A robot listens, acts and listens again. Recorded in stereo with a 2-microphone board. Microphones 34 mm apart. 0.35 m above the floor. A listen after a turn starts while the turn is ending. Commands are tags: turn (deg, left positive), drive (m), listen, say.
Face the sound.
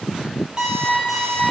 <turn deg="-25"/>
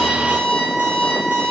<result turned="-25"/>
<turn deg="-130"/>
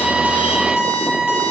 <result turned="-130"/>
<turn deg="-30"/>
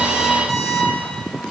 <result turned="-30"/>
<turn deg="10"/>
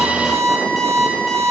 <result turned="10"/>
<say>Facing the alarm clock.</say>